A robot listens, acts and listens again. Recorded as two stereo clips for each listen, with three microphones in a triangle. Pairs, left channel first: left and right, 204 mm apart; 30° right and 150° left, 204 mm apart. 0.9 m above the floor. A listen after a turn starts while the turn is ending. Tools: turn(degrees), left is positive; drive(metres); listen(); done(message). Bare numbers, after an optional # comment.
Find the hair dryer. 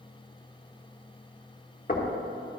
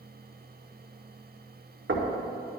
listen()
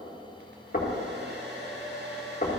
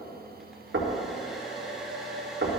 # The hair dryer: 120° right.
turn(-120)
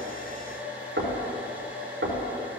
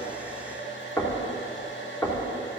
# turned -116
done("Found it: a hair dryer, straight ahead.")